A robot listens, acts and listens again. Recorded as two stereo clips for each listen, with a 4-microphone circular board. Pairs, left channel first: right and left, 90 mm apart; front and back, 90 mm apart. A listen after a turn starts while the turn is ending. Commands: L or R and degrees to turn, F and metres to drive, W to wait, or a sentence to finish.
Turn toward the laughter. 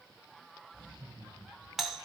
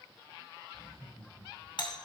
R30
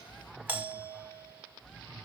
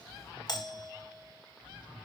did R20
R10
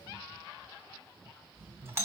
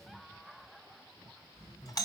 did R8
Facing the laughter.